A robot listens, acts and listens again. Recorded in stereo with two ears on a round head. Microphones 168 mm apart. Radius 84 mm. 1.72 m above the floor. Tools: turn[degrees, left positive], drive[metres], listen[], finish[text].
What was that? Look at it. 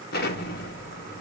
Thought: The explosion: about 55° left or 125° left.
Action: turn[55]
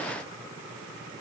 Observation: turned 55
Action: listen[]
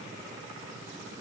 Action: finish[I heard an explosion, but can't make it out now. It was about straight ahead or 70° left.]